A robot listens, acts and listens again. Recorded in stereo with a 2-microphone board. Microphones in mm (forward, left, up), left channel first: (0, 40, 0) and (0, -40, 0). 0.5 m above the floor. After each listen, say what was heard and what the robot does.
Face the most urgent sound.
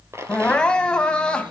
Turn 30° left.
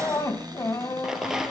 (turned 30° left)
So it is at 140° left. Turn 140° left.
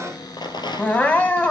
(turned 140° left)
The crying is now 20° left. Turn 20° left.
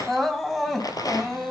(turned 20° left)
Facing the crying.